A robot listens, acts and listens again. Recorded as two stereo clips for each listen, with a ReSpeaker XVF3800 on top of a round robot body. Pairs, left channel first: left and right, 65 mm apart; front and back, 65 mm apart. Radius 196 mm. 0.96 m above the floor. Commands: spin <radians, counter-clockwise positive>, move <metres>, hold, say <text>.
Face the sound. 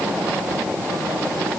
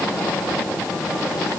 hold
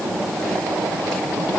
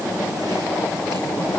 hold
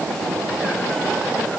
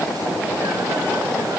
say I can't make out anything.